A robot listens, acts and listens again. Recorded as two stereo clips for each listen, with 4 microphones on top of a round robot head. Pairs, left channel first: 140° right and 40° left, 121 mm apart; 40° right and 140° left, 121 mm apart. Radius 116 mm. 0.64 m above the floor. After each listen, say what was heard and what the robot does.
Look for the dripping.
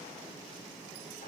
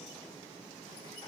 Keep listening.
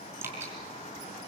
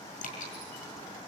The dripping: 30° right. Turn 30° right.
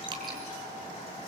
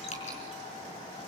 The dripping is now 10° right. Turn 10° right.
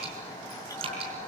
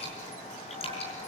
Found it: dripping, straight ahead, over 4 m away.